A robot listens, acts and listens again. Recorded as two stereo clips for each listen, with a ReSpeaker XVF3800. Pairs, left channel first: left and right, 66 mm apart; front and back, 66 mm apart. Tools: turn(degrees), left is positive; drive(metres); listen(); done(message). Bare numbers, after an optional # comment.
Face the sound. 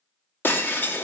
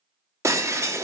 # The breaking glass: 145° left.
turn(145)
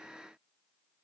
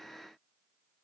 done("Facing where the breaking glass came from. I can't hear it now.")